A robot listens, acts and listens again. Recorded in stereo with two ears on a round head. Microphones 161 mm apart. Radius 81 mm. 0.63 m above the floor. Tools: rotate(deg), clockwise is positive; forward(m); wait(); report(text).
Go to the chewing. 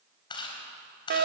rotate(-25)
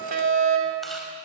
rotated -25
wait()
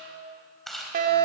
forward(1.0)
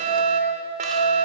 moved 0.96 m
wait()
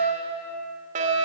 wait()
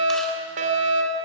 report("I heard chewing from this way, but can't make it out now. I did not reach it.")